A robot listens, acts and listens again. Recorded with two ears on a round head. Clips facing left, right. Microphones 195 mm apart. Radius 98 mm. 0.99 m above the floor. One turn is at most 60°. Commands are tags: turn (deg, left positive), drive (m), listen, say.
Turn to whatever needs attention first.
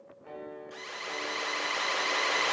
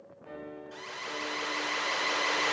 <turn deg="40"/>
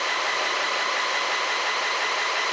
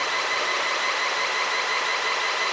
<turn deg="10"/>
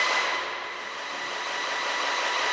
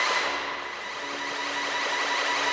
<say>Facing the alarm.</say>